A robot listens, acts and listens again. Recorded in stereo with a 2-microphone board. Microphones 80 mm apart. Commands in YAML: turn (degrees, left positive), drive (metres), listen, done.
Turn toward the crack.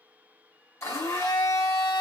listen: true
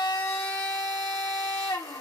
listen: true
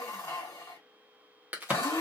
turn: -20
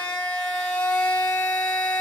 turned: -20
listen: true
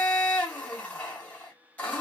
done: "I heard a crack, but can't make it out now. It was about straight ahead or 140° right."